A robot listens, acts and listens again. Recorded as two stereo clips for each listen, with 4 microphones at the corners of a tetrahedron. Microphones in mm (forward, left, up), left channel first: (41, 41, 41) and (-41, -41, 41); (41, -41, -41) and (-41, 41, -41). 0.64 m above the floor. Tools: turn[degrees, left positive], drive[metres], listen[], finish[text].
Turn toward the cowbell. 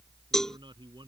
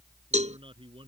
Thought: The cowbell: 130° left.
Action: turn[130]
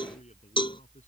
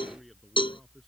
Action: finish[Found it: a cowbell, straight ahead.]